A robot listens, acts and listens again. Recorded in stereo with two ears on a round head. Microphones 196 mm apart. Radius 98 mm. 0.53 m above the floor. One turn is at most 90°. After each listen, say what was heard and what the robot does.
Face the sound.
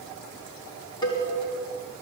The cowbell: about 20° left or 160° left. Turn 20° left.
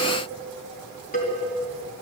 So it is at 140° left. Turn 90° left.
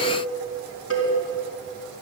The cowbell is now 70° left. Turn 70° left.
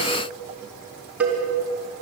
The cowbell is now 10° right. Turn 10° right.
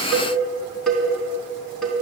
Facing the cowbell.